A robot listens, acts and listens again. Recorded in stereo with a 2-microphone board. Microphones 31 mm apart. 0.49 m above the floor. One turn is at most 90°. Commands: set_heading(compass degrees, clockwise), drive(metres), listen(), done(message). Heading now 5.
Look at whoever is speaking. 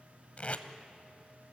listen()
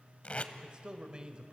set_heading(35)
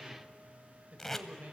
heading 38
set_heading(128)
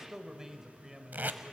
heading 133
set_heading(153)
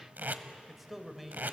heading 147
done("Found it: a man speaking, straight ahead, 1 to 2 m away.")